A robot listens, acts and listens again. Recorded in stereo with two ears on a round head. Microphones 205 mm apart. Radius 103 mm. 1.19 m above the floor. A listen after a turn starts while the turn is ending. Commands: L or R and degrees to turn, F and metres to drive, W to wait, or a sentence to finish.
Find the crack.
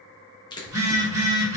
L20
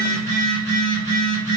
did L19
W
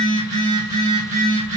I heard a crack, but can't make it out now. It was about straight ahead or 140° left.